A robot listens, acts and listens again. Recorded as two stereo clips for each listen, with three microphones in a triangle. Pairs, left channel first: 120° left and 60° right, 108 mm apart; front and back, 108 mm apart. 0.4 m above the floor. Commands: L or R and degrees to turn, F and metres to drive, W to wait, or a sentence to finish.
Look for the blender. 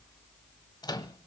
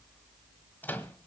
W
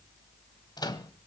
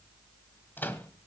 W
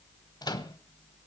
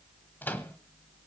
I can't make out a blender to turn to.